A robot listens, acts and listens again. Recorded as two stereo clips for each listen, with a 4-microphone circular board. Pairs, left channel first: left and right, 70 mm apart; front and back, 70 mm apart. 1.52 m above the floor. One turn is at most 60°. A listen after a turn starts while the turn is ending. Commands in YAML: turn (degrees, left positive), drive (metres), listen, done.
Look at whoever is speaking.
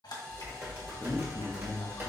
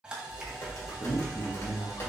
turn: 20
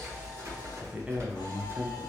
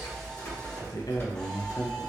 turn: -30
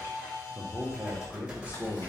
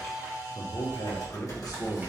turn: -25
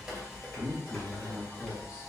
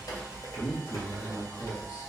turn: -10
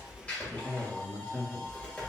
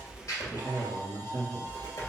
done: "Facing the man speaking."